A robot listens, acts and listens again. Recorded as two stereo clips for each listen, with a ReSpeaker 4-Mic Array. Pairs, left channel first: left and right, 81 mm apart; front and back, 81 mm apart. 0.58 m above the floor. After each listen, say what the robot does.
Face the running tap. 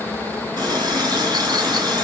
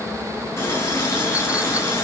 Turn 55° right.
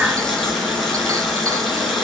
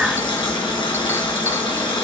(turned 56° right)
Found it: a running tap, straight ahead, over 4 m away.